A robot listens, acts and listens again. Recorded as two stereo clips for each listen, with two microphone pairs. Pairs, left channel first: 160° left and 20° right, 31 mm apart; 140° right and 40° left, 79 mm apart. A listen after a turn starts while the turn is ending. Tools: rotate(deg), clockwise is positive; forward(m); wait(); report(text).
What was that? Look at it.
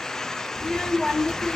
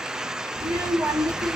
rotate(-75)
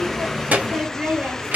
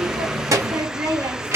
report("Found it: a child speaking, straight ahead, 1 to 2 m away.")